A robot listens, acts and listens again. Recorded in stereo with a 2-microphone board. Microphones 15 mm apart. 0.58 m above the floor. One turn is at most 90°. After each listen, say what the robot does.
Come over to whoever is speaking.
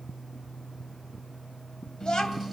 Turn 55° left.
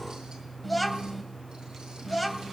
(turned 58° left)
Drive 1.0 m forward.
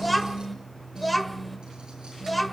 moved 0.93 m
Drive 1.0 m forward.
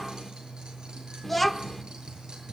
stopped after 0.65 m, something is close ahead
I am next to the child speaking.